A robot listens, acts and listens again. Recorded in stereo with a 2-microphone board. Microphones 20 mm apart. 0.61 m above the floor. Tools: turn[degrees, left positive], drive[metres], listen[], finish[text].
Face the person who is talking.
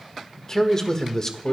Thought: The man speaking: about 25° left or 155° left.
Action: turn[25]
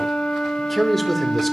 Action: finish[Facing the man speaking, 1 to 2 m away.]